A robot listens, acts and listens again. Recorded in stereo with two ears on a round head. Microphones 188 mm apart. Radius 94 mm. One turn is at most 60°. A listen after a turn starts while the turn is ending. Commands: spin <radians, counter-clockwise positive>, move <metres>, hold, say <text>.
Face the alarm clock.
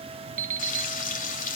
spin -0.70
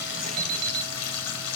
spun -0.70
spin -1.05
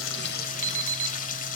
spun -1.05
spin -0.70
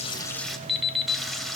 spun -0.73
say Found it: an alarm clock, straight ahead, 1 to 2 m away.